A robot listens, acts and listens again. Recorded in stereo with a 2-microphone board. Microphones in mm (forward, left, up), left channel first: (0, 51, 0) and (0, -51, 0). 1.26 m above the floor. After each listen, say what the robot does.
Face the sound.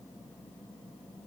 Keep listening.
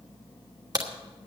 Turn 40° right.
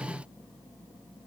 Keep listening.
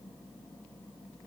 I heard a crack, but can't make it out now. It was about straight ahead or 100° right.